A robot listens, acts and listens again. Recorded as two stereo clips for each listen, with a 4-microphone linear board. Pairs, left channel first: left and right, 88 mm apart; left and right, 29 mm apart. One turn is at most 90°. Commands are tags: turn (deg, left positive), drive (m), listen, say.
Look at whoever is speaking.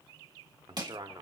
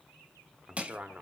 <turn deg="-60"/>
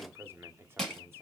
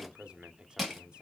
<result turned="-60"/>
<turn deg="-30"/>
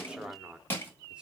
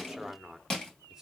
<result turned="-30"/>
<turn deg="-10"/>
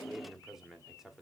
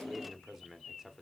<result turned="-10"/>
<say>Found it: a man speaking, straight ahead, 1 to 2 m away.</say>